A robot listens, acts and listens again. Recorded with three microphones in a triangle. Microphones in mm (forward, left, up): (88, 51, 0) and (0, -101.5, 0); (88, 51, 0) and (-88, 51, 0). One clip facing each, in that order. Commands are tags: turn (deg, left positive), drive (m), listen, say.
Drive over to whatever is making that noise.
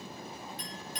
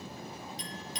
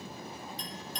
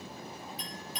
<turn deg="95"/>
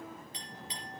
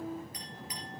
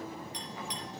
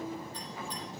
<drive m="1.0"/>
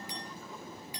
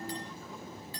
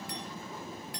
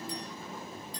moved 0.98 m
<turn deg="-15"/>
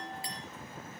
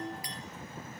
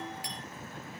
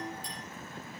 <drive m="1.0"/>
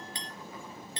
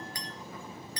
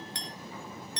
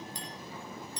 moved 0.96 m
<drive m="1.0"/>
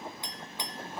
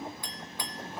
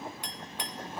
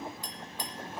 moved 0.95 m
<turn deg="-10"/>
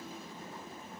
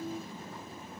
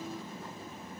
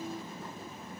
<listen/>
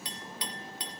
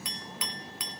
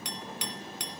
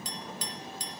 <drive m="1.0"/>
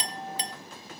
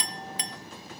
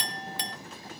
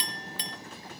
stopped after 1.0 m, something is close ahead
<say>Arrived at the clink, straight ahead.</say>